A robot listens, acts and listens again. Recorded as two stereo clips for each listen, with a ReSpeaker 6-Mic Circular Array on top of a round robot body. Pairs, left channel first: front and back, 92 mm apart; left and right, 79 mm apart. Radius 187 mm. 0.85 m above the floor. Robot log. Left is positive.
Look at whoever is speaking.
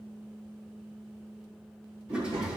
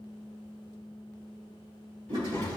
note: The child speaking: 155° left.
cmd yaw +155
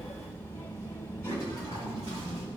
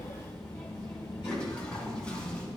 note: The child speaking is now 65° left.
cmd yaw +65
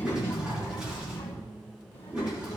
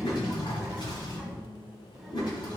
end: Facing the child speaking.